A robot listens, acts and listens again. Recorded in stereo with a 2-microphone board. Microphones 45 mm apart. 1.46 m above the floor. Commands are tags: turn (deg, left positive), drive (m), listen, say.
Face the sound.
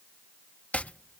<turn deg="30"/>
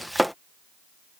<say>Facing the chopping.</say>